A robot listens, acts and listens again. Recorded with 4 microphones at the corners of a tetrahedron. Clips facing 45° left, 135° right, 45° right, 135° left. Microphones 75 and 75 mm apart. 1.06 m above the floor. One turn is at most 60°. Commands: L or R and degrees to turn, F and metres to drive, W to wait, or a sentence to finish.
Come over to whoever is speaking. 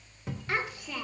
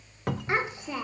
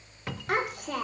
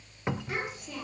R60
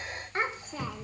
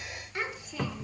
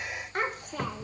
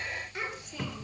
F1.0
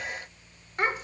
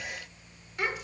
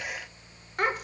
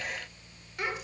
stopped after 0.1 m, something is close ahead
Blocked. The child speaking is further on, straight ahead.